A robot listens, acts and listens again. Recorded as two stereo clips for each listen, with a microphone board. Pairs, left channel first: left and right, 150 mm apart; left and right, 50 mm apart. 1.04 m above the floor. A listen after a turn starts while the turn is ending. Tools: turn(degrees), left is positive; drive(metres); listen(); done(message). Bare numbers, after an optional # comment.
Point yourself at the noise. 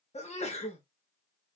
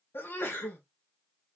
# The sneeze: about 45° left or 135° left.
turn(45)
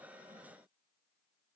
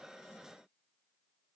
listen()
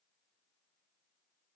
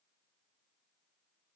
done("I heard a sneeze, but can't make it out now. It was about straight ahead or 90° left.")